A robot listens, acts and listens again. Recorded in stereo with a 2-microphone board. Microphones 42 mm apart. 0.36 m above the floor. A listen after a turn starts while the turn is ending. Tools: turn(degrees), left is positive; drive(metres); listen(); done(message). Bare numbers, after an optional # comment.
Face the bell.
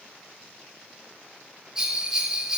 # The bell: about 20° right or 160° right.
turn(-20)
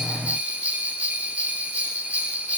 # So it is at 145° right.
turn(-145)
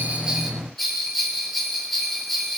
done("Found it: a bell, straight ahead, 2 to 4 m away.")